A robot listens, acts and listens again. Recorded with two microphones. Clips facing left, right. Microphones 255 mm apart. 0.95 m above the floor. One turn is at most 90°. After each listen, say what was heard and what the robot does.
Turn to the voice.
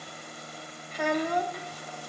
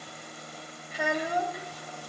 Turn 30° right.
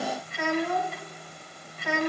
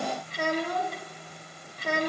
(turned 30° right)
So it is at 140° right. Turn 90° right.
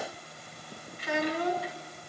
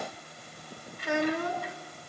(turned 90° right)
The child speaking is now 50° right. Turn 50° right.
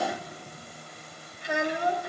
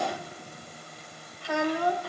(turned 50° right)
The child speaking is now 20° left. Turn 20° left.
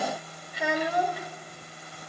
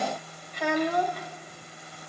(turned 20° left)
The child speaking is now 10° left. Turn 10° left.
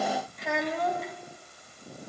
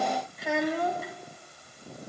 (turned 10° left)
Found it: a child speaking, straight ahead.